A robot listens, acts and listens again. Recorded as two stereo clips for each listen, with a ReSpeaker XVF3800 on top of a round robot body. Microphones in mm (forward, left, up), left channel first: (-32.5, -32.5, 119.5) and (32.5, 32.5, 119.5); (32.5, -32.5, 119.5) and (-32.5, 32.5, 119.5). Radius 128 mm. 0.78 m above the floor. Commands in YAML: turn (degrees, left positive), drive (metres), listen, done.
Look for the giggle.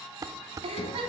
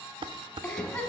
turn: 35
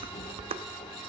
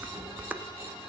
listen: true
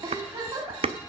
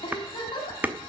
done: "Found it: a giggle, straight ahead, 2 to 4 m away."